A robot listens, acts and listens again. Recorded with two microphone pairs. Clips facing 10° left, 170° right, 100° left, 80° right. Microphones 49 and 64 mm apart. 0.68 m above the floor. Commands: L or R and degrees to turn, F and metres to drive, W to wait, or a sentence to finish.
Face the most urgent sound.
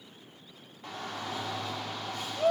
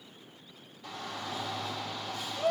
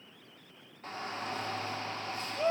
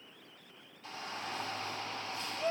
L60
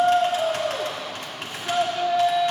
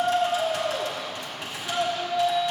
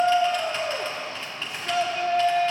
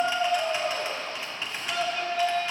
L30
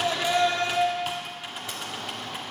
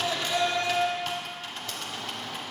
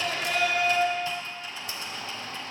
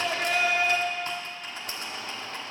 R20
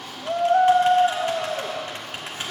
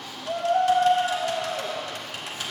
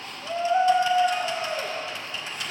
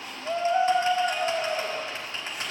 Facing the shout, 1 to 2 m away.